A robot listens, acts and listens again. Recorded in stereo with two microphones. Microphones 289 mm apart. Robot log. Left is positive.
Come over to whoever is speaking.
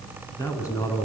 cmd yaw +30
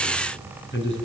note: So it is at 140° left.
cmd yaw +140
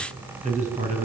note: The man speaking is now 25° right.
cmd yaw -25
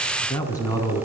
note: The man speaking is now 10° left.
cmd yaw +10
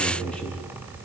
cmd fwd 1.0
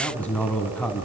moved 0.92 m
cmd fwd 1.0
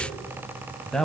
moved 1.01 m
cmd fwd 1.0
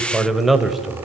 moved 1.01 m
cmd fwd 1.0
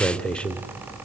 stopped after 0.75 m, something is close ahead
end: I am next to the man speaking.